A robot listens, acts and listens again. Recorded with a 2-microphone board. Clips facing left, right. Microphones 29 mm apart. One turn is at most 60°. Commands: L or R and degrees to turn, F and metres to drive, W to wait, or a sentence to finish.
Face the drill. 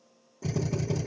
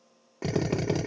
R60
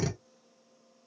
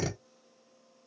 Facing the drill.